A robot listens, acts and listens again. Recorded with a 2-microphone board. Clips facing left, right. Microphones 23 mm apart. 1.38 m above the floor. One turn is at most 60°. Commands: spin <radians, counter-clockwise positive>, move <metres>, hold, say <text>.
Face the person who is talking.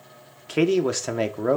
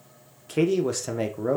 spin 0.44
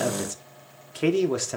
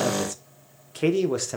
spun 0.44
say Facing the man speaking.